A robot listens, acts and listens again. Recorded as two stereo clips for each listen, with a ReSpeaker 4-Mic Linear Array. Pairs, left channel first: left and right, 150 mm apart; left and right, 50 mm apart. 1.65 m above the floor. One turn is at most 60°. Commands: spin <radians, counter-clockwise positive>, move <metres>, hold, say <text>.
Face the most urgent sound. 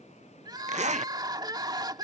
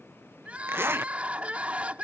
spin -0.52
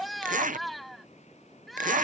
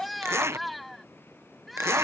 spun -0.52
say Facing the crying.